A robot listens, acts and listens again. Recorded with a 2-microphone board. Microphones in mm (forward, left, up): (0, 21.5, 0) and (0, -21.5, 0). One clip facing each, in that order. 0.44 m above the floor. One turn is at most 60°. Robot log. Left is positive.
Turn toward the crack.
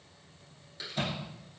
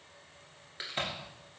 note: The crack: about 40° right or 140° right.
cmd yaw -40
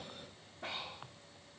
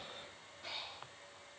cmd idle
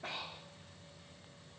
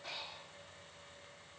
end: I heard a crack, but can't make it out now. It was about straight ahead or 100° right.